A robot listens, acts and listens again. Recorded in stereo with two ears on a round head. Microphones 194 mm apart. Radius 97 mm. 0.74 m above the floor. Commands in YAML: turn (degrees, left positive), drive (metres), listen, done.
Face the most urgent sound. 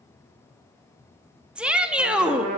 turn: -30
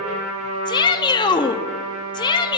turn: 25
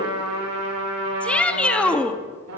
done: "Facing the shout."